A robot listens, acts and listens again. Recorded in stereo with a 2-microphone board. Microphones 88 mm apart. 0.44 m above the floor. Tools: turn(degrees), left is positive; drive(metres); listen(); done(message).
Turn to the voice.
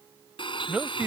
turn(degrees=-15)
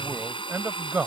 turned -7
turn(degrees=-25)
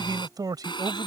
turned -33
turn(degrees=-120)
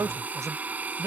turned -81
turn(degrees=-40)
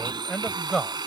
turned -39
done("Facing the man speaking.")